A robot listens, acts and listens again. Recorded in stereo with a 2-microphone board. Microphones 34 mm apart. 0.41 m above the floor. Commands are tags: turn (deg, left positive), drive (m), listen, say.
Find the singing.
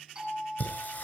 <turn deg="50"/>
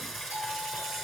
<say>Found it: singing, straight ahead.</say>